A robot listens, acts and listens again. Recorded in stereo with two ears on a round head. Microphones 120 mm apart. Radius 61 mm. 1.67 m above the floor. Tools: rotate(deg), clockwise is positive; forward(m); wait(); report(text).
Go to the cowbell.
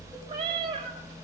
wait()
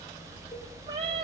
wait()
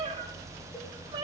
report("I can't make out a cowbell, only a cat meowing.")